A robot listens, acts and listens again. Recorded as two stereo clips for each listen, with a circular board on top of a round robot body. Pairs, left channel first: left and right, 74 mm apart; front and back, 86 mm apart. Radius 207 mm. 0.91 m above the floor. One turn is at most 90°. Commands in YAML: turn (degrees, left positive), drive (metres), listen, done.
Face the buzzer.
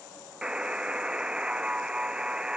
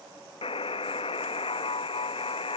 turn: -10
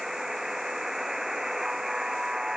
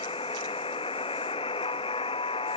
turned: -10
done: "Facing the buzzer."